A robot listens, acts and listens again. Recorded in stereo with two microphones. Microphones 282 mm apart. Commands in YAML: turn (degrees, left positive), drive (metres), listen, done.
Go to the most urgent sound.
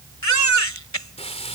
turn: 70
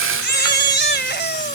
turn: 40
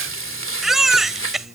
drive: 1.0
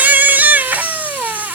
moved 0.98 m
drive: 1.0
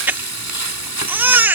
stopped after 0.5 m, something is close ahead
done: "Arrived at the baby crying, straight ahead."